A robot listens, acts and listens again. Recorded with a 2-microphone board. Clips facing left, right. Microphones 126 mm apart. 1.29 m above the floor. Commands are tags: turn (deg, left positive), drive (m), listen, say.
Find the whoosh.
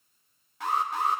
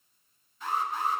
<listen/>
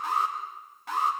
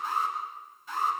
<listen/>
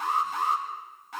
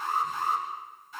<say>I can't make out a whoosh to turn to.</say>